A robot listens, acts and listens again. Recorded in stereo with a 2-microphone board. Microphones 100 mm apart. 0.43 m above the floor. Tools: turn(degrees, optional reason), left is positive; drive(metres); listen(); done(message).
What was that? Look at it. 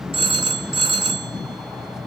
turn(degrees=-65, reason="The phone ringing: about 65° right or 115° right.")
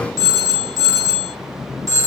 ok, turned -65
turn(degrees=-40, reason="So it is at 40° right.")
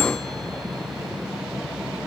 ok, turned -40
listen()
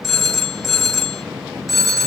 done("Facing the phone ringing, 1 to 2 m away.")